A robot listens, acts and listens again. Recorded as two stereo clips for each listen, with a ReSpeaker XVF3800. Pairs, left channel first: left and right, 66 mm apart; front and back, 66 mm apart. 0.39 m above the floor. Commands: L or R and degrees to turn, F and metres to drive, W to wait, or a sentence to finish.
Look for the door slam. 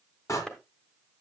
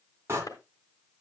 L130
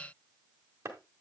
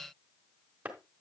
I heard a door slam from this way, but can't make it out now.